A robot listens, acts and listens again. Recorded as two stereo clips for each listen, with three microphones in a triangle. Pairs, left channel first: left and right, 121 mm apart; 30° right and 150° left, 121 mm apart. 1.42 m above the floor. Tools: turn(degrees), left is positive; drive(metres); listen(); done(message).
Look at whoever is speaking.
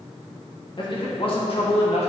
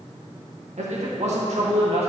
turn(degrees=120)
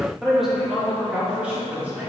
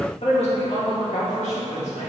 turn(degrees=-15)
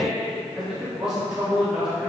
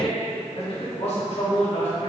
done("Facing the man speaking, 2 to 4 m away.")